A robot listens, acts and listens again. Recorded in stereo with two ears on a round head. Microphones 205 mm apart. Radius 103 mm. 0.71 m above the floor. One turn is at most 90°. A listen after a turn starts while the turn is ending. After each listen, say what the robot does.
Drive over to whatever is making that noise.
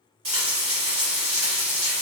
Turn 20° right.
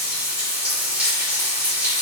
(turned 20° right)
Drive 1.0 m forward.
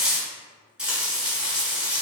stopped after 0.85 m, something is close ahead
I am next to the frying.